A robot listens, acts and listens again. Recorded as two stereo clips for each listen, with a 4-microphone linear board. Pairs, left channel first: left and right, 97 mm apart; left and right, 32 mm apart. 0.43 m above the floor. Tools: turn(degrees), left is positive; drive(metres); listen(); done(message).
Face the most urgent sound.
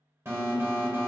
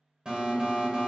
turn(degrees=-30)
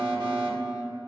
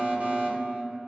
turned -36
turn(degrees=-110)
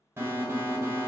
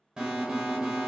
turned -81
turn(degrees=-30)
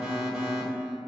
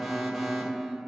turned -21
done("Facing the alarm, 1 to 2 m away.")